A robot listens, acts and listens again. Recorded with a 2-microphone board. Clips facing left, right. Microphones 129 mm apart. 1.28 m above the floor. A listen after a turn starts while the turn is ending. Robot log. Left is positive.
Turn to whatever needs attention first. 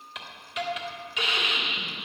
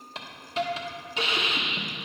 cmd idle
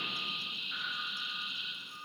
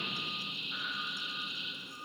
cmd idle
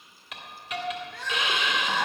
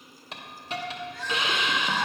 note: The crying: about 55° left or 125° left.
cmd yaw +55
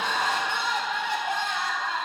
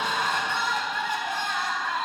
note: So it is at 70° left.
cmd yaw +70
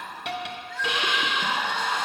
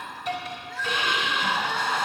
note: The crying is now 10° right.
cmd yaw -10
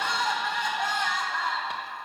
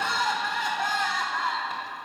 end: Found it: crying, straight ahead, 1 to 2 m away.